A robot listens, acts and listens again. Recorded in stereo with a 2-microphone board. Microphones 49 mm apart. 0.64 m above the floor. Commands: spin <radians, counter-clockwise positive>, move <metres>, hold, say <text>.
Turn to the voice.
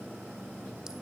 hold
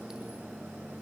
hold
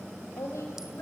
spin 1.57
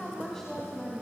spin 0.17
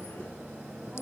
hold
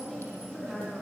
say Facing the woman speaking, over 4 m away.